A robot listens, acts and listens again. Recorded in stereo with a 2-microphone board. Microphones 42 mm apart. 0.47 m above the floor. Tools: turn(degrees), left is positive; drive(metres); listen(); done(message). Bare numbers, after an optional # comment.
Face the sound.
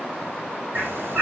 # The bird: about 50° right or 130° right.
turn(-50)
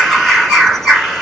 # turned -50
done("Found it: a bird, straight ahead, 2 to 4 m away.")